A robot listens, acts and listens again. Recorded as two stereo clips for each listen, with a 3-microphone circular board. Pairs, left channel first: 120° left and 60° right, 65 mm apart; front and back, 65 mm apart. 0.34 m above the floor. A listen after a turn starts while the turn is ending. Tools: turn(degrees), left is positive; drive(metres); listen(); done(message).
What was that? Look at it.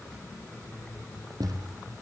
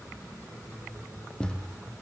turn(degrees=-75)
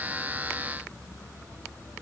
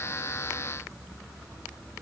done("I heard a thud from this way, but can't make it out now.")